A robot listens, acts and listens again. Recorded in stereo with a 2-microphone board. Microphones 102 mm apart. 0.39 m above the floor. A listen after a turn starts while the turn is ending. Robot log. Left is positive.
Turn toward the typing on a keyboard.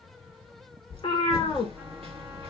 note: The typing on a keyboard: about 60° right or 120° right.
cmd yaw -60
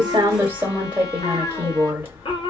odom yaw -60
note: So it is at 20° right.
cmd yaw -20
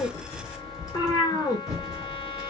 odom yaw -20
end: Found it: typing on a keyboard, straight ahead.